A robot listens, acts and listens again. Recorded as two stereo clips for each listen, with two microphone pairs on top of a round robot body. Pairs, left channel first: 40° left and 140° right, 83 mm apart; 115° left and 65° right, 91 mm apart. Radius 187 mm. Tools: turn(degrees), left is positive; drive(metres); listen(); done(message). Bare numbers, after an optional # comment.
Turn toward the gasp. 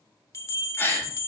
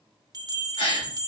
# The gasp: 105° left.
turn(105)
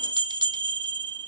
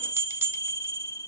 done("I heard a gasp from this way, but can't make it out now.")